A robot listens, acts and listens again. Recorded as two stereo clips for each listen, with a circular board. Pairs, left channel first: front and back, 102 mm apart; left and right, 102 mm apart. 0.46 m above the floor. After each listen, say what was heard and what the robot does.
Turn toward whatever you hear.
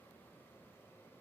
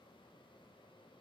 Keep listening.
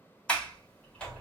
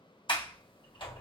The sliding door: 80° left. Turn 80° left.
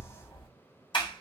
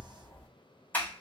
The sliding door is now 20° left. Turn 20° left.
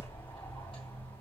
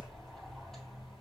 Facing the sliding door.